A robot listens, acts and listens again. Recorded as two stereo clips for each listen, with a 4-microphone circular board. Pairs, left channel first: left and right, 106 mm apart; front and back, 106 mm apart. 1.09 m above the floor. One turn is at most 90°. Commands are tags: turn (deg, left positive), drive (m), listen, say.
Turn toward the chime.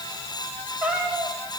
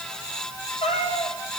<listen/>
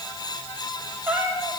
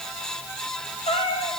<listen/>
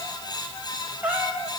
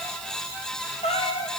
<say>I can't make out a chime, only a cat meowing.</say>